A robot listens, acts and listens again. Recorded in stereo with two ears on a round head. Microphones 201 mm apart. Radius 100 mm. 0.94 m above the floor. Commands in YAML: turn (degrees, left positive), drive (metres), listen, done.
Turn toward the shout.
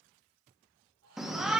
turn: 30
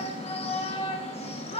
turn: 150
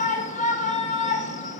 turn: 35
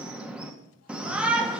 done: "Found it: a shout, straight ahead."